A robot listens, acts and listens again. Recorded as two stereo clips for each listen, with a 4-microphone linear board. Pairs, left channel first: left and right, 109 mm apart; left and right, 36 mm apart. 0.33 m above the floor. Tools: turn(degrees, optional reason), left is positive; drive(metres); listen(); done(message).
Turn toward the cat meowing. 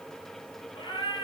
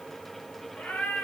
turn(degrees=50, reason="The cat meowing: about 50° left or 130° left.")
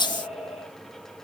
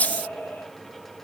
turn(degrees=75, reason="So it is at 75° left.")
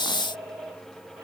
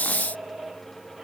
turn(degrees=-30, reason="The cat meowing is now 30° right.")
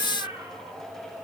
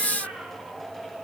turn(degrees=-30, reason="The cat meowing is now 30° right.")
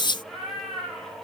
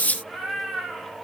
done("Found it: a cat meowing, straight ahead.")